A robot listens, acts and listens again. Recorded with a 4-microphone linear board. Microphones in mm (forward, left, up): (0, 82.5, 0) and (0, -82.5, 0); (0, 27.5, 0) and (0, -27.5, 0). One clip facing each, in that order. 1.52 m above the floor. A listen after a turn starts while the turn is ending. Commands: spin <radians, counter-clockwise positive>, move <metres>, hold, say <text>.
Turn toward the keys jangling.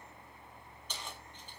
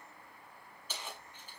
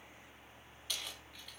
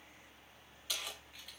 spin -0.52
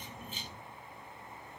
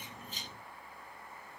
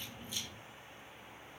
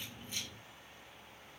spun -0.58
hold
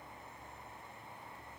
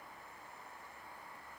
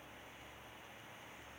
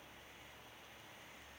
hold
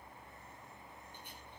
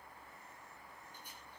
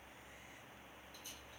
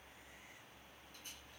say I heard keys jangling, but can't make it out now. It was about 25° left or 140° right.